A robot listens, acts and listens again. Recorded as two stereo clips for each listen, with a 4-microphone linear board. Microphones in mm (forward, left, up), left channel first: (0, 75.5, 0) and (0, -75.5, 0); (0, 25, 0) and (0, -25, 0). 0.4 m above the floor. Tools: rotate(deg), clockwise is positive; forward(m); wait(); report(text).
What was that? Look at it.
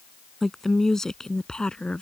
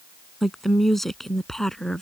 rotate(-30)
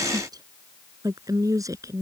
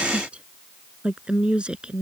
rotate(20)
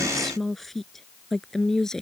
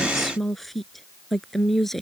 report("Found it: a woman speaking, straight ahead.")